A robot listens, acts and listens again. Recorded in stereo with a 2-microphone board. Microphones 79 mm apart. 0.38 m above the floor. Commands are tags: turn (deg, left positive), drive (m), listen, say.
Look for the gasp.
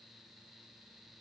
<listen/>
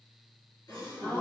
<turn deg="55"/>
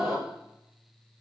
<say>Found it: a gasp, straight ahead, over 4 m away.</say>